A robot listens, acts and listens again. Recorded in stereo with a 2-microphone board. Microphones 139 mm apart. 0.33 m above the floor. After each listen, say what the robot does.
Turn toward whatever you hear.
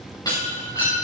Turn 30° left.
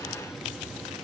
Keep listening.
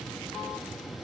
I heard breaking glass, but can't make it out now. It was about straight ahead or 120° left.